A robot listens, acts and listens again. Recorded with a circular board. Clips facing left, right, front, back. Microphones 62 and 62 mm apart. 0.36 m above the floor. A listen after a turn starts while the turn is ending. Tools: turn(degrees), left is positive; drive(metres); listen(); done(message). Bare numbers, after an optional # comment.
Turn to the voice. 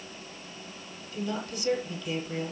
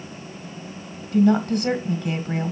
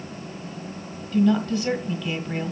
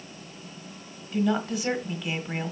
# The woman speaking: 110° right.
turn(-110)
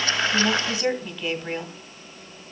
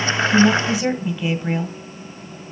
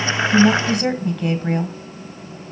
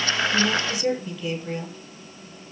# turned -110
# The woman speaking is now 15° right.
turn(-15)
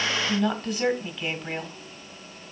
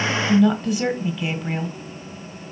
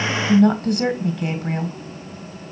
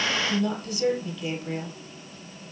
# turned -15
done("Facing the woman speaking, 1 to 2 m away.")